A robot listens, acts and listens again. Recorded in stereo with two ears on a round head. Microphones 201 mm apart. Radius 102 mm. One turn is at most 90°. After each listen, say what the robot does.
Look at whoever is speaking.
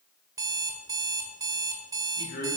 Turn 40° left.
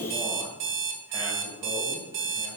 Turn 10° right.
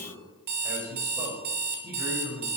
Turn 15° right.
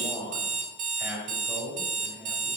Facing the man speaking.